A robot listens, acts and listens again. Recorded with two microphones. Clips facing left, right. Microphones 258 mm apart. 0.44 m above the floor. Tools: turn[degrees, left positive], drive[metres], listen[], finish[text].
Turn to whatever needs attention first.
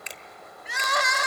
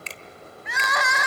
Thought: The crying: about 35° left or 145° left.
Action: turn[35]
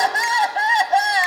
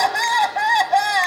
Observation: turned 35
Action: finish[Found it: crying, straight ahead, 1 to 2 m away.]